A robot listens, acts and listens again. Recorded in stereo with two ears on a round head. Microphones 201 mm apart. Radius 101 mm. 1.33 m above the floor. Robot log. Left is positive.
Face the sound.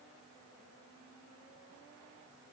cmd idle
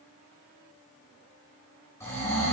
cmd yaw +30
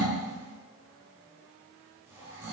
note: So it is at 15° right.
cmd yaw -15
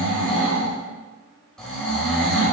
end: Found it: snoring, straight ahead, 2 to 4 m away.